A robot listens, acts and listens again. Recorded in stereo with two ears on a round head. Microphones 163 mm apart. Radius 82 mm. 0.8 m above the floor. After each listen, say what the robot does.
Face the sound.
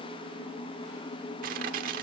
Turn 50° right.
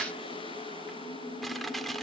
Facing the crushing, 1 to 2 m away.